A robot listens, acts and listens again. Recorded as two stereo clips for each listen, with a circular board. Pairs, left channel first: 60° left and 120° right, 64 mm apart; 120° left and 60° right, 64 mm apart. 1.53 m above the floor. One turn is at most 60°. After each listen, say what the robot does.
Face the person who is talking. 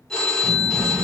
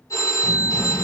Turn 60° right.
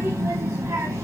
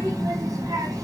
Turn 60° right.
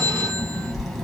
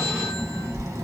Turn 30° right.
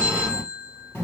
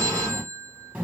Facing the child speaking, 1 to 2 m away.